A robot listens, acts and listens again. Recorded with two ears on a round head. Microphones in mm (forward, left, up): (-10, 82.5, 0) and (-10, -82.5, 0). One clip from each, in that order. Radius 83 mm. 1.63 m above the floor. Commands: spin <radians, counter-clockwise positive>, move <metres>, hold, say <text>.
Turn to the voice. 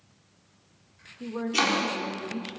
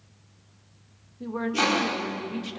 spin -0.79
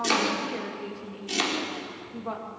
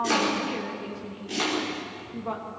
say Facing the woman speaking.